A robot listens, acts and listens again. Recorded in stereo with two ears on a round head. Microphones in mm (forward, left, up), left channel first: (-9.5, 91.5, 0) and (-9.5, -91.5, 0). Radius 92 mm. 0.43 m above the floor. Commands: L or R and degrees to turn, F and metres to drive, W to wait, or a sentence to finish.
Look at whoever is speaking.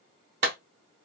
W
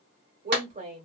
R40
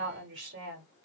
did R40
R95
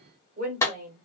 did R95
R45
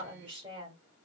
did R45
R30
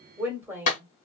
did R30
R10
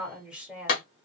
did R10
Facing the woman speaking, 1 to 2 m away.